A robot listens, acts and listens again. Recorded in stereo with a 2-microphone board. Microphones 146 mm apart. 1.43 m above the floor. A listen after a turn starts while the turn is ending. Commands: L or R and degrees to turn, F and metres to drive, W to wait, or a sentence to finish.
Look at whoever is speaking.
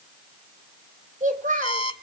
R65
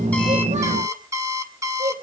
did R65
R60
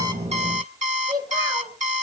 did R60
R25
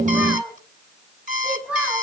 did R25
R10
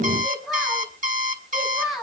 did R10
Found it: a child speaking, straight ahead, over 4 m away.